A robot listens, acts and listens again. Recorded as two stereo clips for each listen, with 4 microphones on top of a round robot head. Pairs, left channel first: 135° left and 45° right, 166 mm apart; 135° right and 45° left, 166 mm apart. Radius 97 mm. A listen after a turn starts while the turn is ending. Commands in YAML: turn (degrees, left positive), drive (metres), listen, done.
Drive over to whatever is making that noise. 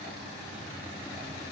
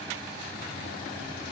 listen: true
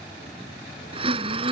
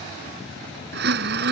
turn: 15
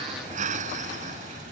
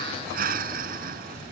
drive: 1.0
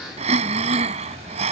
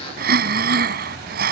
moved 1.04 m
turn: 10
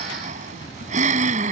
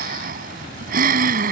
drive: 1.0
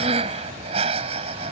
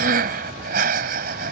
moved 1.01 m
turn: 10
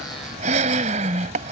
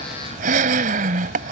drive: 1.0
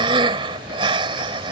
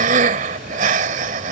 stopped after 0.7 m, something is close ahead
turn: 10
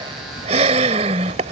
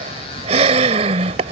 done: "Arrived at the breathing, straight ahead."